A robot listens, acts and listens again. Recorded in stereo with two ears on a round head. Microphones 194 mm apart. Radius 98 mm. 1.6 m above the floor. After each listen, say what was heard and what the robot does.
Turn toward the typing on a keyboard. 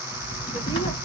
The typing on a keyboard: about 25° left or 155° left. Turn 25° left.
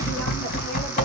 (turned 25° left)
So it is at 130° left. Turn 130° left.
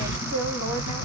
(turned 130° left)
The typing on a keyboard is now 45° left. Turn 45° left.
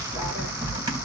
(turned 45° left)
The typing on a keyboard is now 20° right. Turn 20° right.
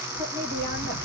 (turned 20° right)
Found it: typing on a keyboard, straight ahead, 2 to 4 m away.